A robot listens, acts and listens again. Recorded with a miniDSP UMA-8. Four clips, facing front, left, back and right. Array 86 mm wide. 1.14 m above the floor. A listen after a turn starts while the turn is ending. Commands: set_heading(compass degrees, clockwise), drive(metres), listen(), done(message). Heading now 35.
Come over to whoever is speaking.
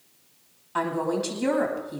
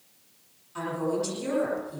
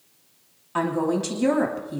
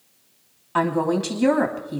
set_heading(140)
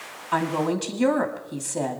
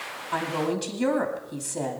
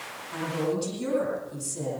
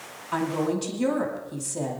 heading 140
set_heading(130)
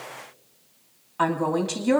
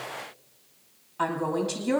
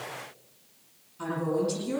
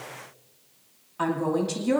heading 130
drive(1.0)
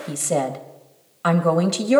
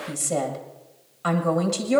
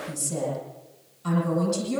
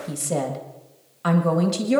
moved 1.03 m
drive(1.0)
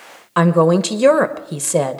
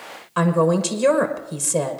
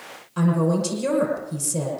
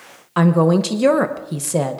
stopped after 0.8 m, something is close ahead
set_heading(150)
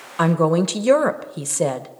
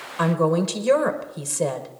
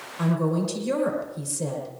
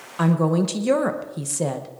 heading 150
done("Arrived at the woman speaking, straight ahead.")